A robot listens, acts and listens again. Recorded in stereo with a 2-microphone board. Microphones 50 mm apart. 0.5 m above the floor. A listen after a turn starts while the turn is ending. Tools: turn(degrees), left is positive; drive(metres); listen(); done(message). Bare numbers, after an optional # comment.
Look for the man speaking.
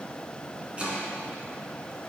listen()
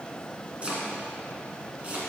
listen()
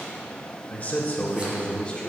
# The man speaking: about 20° left or 160° left.
turn(20)
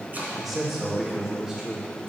# So it is at 15° right.
turn(-15)
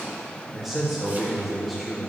done("Found it: a man speaking, straight ahead.")